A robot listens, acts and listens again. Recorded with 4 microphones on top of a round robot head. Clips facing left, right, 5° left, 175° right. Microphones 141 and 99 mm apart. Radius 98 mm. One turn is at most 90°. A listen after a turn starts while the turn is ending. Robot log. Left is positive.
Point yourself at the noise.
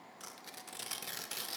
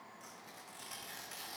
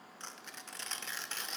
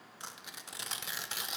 note: The tearing paper: 110° left.
cmd yaw +90
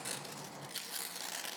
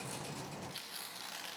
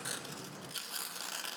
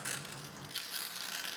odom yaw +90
note: The tearing paper is now 55° left.
cmd yaw +55
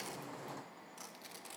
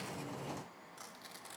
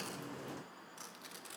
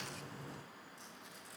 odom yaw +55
note: The tearing paper is now 15° left.
cmd yaw +15
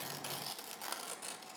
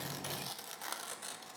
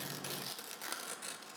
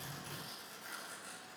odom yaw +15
end: Found it: tearing paper, straight ahead.